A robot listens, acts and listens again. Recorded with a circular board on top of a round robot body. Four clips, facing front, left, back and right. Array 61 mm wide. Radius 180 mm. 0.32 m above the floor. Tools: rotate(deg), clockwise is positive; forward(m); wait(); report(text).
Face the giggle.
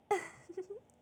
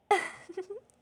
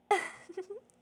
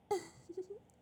rotate(-115)
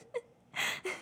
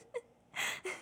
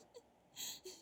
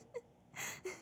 rotate(-30)
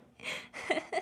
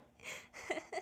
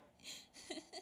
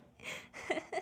rotate(10)
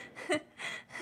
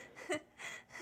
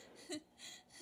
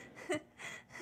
report("Found it: a giggle, straight ahead.")